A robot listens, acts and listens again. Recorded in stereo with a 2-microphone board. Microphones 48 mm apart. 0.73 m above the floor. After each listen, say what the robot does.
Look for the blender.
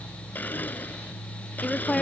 Turn 40° left.
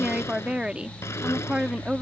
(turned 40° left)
Keep listening.
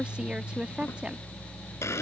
Turn 100° left.
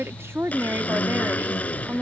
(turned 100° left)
Turn 30° left.
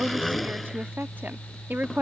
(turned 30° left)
Found it: a blender, straight ahead.